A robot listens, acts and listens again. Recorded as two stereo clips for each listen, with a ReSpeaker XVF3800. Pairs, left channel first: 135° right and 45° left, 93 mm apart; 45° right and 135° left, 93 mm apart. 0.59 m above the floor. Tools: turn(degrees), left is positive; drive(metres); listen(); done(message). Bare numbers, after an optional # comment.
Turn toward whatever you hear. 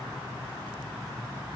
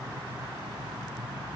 listen()
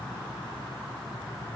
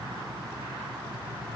listen()
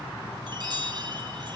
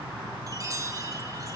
# The chime: 85° left.
turn(85)
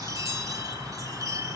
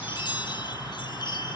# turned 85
# The chime is now 10° right.
turn(-10)
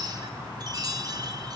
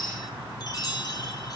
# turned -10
done("Facing the chime, over 4 m away.")